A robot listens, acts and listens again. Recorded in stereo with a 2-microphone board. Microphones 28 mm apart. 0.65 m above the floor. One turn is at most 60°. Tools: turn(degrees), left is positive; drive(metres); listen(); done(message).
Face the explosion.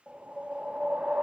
listen()
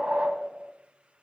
listen()
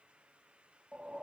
done("I can't make out an explosion to turn to.")